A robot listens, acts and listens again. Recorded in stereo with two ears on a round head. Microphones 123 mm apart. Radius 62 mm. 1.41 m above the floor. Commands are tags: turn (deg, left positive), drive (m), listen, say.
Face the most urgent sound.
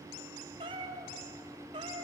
<listen/>
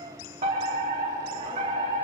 <turn deg="-50"/>
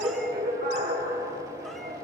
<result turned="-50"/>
<turn deg="-80"/>
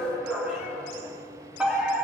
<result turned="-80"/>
<turn deg="-10"/>
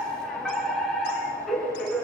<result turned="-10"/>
<say>Facing the fire alarm, over 4 m away.</say>